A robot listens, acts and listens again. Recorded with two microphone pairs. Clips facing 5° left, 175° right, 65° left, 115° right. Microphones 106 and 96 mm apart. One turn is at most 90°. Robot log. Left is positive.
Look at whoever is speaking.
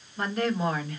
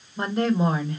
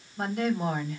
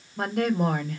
note: The woman speaking: 115° right.
cmd yaw -90
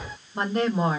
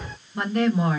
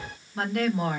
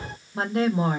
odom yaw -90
note: The woman speaking is now 55° right.
cmd yaw -55
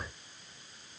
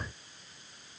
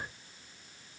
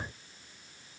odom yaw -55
cmd idle
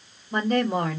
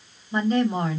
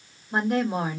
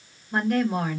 end: Facing the woman speaking, 1 to 2 m away.